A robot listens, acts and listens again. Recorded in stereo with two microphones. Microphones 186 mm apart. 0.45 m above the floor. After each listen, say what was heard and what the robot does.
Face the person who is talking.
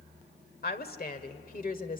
The woman speaking: about 45° left or 135° left. Turn 45° left.
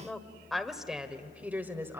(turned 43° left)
So it is at 15° right. Turn 15° right.
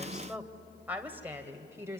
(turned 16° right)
The woman speaking is now 15° right. Turn 15° right.
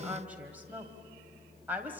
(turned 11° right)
The woman speaking is now 10° right. Turn 10° right.
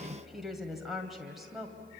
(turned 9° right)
Found it: a woman speaking, straight ahead.